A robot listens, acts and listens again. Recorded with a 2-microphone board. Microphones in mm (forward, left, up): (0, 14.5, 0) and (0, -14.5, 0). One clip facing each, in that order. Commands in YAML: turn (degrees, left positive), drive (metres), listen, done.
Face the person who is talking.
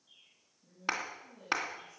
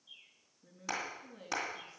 turn: -45
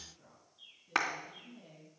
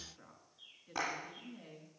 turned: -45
turn: -85
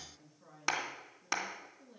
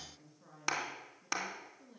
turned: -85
done: "Found it: a woman speaking, straight ahead, over 4 m away."